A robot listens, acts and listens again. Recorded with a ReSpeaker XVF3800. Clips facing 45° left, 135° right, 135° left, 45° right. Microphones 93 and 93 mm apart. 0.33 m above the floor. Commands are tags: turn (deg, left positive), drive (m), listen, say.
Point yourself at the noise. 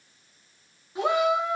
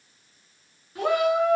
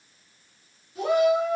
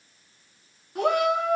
<turn deg="-25"/>
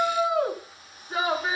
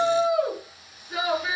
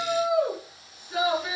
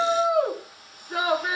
<turn deg="-10"/>
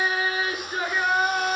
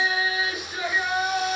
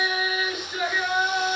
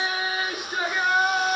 <say>Found it: a shout, straight ahead.</say>